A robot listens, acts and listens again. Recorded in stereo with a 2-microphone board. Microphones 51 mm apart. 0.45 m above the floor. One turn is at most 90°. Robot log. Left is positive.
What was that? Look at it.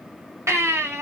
note: The baby crying: about 65° right or 115° right.
cmd yaw -65
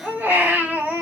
note: So it is at 35° right.
cmd yaw -35
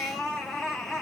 end: Found it: a baby crying, straight ahead, 1 to 2 m away.